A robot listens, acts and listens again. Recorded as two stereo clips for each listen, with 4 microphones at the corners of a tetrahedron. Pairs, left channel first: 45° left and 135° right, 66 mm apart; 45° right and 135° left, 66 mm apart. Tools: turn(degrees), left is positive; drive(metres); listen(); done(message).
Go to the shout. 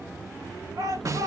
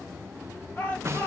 turn(degrees=-110)
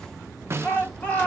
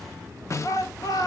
turn(degrees=-20)
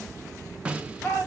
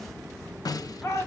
drive(metres=1.0)
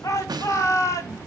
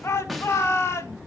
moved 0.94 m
drive(metres=1.0)
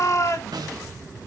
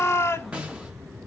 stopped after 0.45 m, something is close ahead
done("I am next to the shout.")